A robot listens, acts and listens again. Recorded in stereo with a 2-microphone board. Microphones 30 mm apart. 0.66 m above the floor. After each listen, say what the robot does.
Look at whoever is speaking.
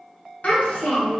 Turn 65° left.
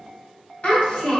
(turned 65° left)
Turn 50° left.
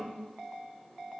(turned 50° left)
Keep listening.
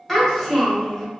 Turn 15° left.
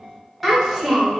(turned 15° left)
Facing the child speaking, 1 to 2 m away.